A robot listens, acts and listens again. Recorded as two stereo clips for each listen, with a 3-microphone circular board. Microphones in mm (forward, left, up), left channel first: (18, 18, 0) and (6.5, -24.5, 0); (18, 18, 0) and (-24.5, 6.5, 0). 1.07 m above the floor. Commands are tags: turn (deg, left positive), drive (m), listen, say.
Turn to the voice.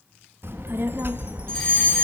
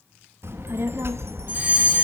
<turn deg="-140"/>
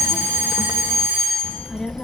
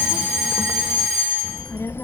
<say>Found it: a child speaking, straight ahead.</say>